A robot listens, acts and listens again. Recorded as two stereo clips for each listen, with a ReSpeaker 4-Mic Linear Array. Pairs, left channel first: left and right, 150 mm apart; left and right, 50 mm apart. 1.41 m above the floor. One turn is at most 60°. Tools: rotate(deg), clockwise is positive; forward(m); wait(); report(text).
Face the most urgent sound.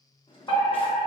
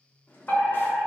rotate(-35)
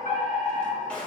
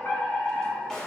rotate(-60)
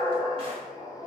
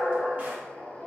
rotate(-40)
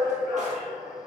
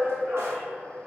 rotate(10)
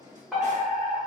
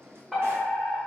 report("Found it: a fire alarm, straight ahead, 1 to 2 m away.")